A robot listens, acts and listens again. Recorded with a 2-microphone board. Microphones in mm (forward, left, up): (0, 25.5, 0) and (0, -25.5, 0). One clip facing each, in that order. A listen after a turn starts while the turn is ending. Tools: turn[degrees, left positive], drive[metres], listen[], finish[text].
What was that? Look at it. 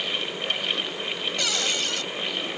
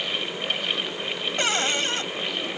Thought: The cupboard door: about 35° right or 145° right.
Action: turn[-35]
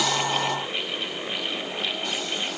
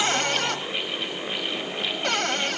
Thought: So it is at 110° right.
Action: turn[-110]
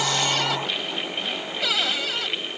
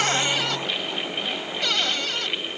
Action: finish[Found it: a cupboard door, straight ahead.]